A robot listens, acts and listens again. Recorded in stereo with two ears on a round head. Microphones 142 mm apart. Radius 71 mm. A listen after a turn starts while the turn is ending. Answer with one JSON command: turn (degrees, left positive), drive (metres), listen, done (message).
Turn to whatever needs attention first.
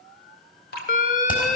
{"turn": 55}
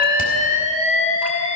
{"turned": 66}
{"turn": 50}
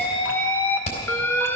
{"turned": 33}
{"turn": 15}
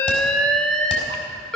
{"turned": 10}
{"done": "Found it: an alarm, straight ahead, under 1 m away."}